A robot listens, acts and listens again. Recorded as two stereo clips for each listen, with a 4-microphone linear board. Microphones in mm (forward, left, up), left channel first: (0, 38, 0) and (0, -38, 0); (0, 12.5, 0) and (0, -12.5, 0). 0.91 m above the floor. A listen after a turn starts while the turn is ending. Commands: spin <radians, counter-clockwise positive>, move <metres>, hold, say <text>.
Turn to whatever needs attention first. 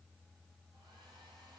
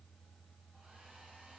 hold
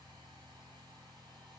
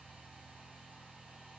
hold
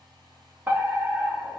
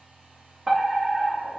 spin -0.44
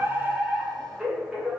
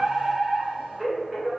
spin -0.17
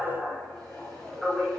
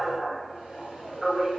say Facing the fire alarm, 2 to 4 m away.